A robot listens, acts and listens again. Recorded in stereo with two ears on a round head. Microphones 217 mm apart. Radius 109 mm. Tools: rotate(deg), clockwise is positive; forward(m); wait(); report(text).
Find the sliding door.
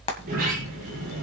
rotate(40)
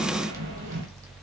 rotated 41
rotate(100)
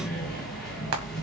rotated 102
report("Facing the sliding door, over 4 m away.")